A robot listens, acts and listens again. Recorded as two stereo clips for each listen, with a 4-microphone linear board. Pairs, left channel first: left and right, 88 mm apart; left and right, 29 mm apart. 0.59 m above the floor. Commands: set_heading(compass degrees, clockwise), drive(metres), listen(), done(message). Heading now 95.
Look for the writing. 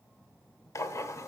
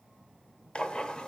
set_heading(60)
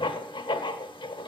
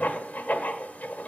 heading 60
set_heading(310)
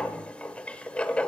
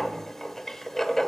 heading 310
set_heading(295)
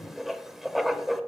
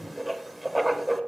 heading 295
done("Found it: writing, straight ahead, under 1 m away.")